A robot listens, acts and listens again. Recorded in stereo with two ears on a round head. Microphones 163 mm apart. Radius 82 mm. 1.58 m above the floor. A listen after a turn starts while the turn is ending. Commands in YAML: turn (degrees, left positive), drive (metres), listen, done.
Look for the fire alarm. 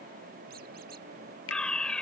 turn: 30
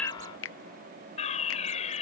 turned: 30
turn: 140
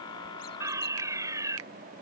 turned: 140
turn: -15
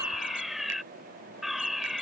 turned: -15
done: "Facing the fire alarm."